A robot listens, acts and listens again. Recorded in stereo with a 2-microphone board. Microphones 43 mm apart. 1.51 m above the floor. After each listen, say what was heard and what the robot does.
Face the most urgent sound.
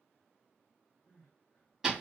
The crying: about 60° left or 120° left. Turn 60° left.
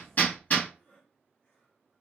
So it is at 30° left. Turn 30° left.
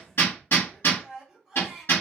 The crying is now 20° right. Turn 20° right.
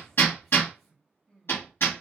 Facing the crying, 1 to 2 m away.